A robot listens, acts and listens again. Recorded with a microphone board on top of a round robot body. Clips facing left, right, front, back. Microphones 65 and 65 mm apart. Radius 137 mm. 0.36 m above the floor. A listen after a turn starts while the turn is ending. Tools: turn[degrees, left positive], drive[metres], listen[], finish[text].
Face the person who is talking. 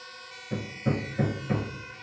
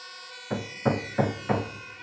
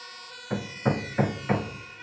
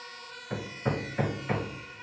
Action: listen[]
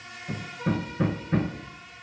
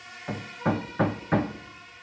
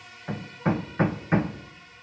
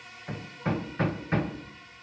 Action: listen[]
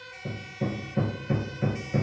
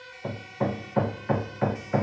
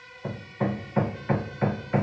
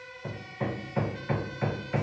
Action: finish[I can't make out anyone speaking, only hammering.]